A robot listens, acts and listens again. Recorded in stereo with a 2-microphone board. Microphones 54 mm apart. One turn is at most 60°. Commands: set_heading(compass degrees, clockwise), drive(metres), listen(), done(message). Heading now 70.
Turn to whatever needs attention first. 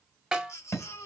set_heading(10)
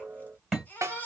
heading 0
set_heading(325)
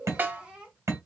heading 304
set_heading(324)
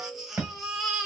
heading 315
set_heading(325)
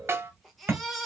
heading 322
done("Found it: a baby crying, straight ahead, 1 to 2 m away.")